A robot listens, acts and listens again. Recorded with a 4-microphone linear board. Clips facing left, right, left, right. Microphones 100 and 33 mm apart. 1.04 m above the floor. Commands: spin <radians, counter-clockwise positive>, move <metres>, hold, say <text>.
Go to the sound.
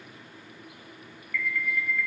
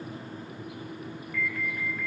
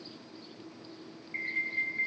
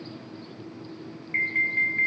spin -0.70
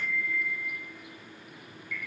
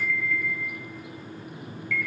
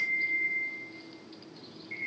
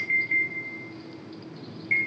spin -1.75
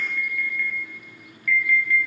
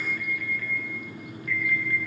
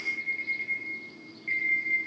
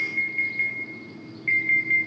spin -0.61
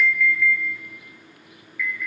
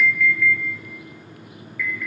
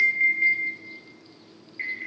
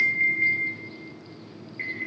move 1.0
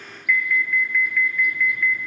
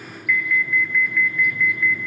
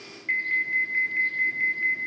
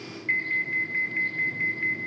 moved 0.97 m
move 1.0
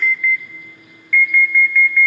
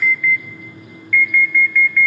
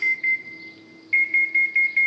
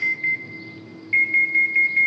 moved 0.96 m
move 1.0
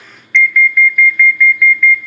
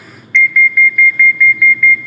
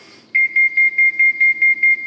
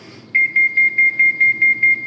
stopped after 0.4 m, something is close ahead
say I am next to the alarm.